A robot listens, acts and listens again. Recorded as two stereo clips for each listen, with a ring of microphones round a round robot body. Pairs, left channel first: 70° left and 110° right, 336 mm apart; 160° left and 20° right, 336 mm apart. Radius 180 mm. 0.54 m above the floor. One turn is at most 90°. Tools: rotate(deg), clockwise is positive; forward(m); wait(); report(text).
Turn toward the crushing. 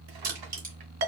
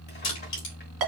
rotate(90)
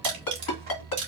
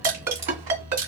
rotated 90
rotate(85)
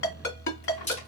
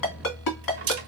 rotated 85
report("Facing the crushing, 2 to 4 m away.")